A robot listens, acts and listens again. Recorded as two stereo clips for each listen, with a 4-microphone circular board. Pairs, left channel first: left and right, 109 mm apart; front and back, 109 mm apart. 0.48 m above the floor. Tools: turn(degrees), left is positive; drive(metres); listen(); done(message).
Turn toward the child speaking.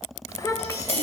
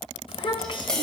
turn(degrees=35)
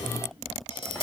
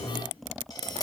listen()
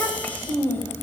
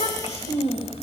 turn(degrees=20)
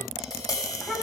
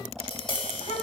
turn(degrees=10)
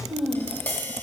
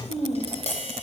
done("Facing the child speaking.")